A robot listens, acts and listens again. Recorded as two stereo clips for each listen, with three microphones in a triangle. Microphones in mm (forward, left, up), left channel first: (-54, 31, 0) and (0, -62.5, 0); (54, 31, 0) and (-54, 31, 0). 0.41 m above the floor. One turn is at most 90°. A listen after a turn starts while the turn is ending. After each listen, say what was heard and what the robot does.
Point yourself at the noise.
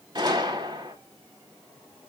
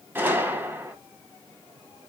The gunshot: 110° right. Turn 90° right.
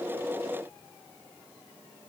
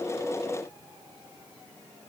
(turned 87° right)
Nothing new. It was at 20° right. Turn 20° right.
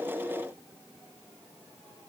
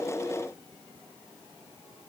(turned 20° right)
Facing where the gunshot came from. I can't hear it now.